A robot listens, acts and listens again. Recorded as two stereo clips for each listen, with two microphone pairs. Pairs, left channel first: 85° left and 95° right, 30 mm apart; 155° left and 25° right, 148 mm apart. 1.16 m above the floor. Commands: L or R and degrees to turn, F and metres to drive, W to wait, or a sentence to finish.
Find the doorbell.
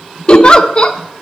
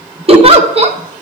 W
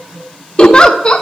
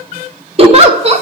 W
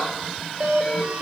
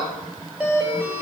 R110
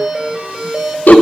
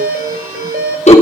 R25
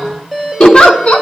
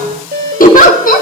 Facing the doorbell, 2 to 4 m away.